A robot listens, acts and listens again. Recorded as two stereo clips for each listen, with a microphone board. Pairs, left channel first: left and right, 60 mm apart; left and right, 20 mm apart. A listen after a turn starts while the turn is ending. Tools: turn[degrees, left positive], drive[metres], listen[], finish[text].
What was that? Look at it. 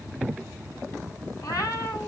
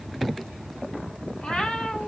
Action: turn[90]
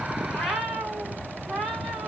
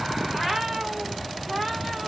Action: finish[Found it: a cat meowing, straight ahead, 2 to 4 m away.]